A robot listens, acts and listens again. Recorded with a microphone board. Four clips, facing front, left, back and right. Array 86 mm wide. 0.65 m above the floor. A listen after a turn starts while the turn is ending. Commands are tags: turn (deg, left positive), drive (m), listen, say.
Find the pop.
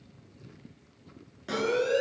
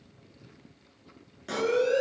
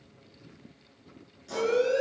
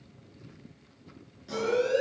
<turn deg="40"/>
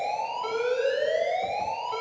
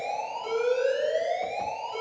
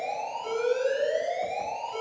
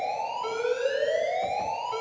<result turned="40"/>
<say>I heard a pop from this way, but can't make it out now.</say>